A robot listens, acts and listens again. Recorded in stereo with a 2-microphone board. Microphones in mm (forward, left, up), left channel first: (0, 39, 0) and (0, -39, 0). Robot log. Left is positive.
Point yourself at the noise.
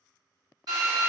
note: The drill: about 60° right or 120° right.
cmd yaw -60
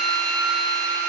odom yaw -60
note: So it is at 20° right.
cmd yaw -20
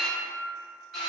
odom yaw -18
end: Facing the drill, 1 to 2 m away.